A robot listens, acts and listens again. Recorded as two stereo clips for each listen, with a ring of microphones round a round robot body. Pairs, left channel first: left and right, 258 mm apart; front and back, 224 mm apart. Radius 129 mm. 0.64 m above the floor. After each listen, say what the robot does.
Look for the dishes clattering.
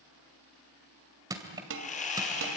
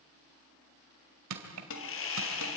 Turn 45° right.
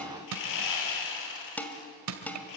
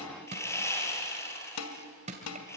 Facing the dishes clattering.